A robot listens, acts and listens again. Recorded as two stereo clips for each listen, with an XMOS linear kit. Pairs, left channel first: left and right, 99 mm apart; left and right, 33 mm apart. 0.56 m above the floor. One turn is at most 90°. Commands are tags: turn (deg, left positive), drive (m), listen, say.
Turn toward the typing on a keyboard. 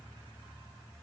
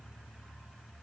<listen/>
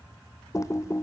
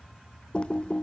<turn deg="30"/>
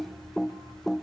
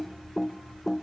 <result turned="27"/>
<say>Found it: typing on a keyboard, straight ahead, under 1 m away.</say>